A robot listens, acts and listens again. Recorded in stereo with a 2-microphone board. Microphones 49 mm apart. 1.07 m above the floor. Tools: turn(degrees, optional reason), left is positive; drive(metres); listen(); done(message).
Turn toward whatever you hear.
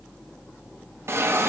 turn(degrees=-60, reason="The hiss: about 60° right or 120° right.")
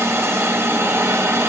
turn(degrees=-60, reason="So it is at 60° right.")
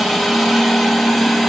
done("Found it: a hiss, straight ahead.")